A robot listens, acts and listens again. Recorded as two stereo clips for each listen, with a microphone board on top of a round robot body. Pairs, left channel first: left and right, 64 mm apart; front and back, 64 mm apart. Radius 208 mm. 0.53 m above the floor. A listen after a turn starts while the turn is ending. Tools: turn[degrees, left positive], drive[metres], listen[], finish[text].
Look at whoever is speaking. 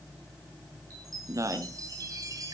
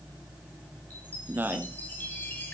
Thought: The man speaking: 120° right.
Action: turn[-120]
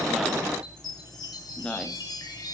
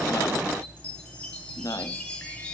Thought: The man speaking is now 15° left.
Action: turn[15]
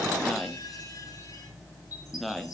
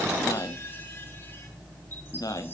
Action: finish[Found it: a man speaking, straight ahead, 1 to 2 m away.]